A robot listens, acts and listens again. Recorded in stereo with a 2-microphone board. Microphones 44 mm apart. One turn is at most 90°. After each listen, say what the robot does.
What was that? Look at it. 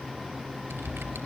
Turn 55° right.
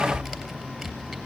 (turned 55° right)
Facing the typing on a keyboard, 2 to 4 m away.